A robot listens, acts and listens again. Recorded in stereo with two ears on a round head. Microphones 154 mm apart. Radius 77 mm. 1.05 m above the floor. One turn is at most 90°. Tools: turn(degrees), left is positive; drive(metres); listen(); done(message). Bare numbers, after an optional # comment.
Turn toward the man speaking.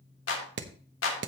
listen()
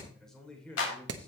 turn(30)
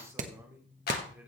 listen()
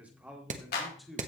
turn(30)
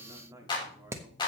# So it is at 10° right.
turn(-10)
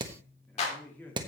# The man speaking is now 10° left.
turn(10)
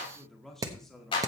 done("Facing the man speaking, 1 to 2 m away.")